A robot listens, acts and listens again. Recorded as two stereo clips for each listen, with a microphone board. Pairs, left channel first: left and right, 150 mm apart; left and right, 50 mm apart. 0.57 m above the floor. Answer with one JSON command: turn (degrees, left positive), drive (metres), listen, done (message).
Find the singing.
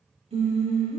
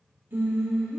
{"turn": -45}
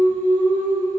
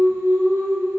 {"turn": -80}
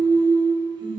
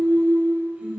{"turn": -35}
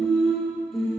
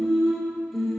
{"done": "Found it: singing, straight ahead, 1 to 2 m away."}